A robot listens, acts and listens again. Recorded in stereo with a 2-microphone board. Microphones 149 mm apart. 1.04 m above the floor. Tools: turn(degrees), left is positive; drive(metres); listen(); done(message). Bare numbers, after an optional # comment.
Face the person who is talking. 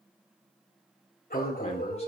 # The man speaking: about 45° left or 135° left.
turn(45)
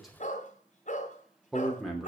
done("Facing the man speaking, 2 to 4 m away.")